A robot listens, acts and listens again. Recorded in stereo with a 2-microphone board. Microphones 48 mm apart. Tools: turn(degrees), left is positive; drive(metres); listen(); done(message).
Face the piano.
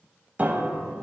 turn(degrees=-35)
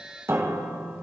turn(degrees=-110)
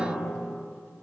turn(degrees=-25)
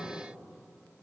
listen()
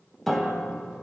done("Found it: a piano, straight ahead, under 1 m away.")